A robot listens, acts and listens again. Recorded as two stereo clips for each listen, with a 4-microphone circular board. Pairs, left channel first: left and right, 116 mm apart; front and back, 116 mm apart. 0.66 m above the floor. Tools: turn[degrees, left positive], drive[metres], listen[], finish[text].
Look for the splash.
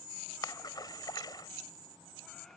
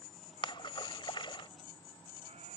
Thought: The splash: 40° left.
Action: turn[40]
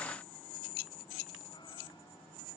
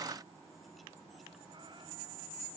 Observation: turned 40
Action: finish[I heard a splash from this way, but can't make it out now.]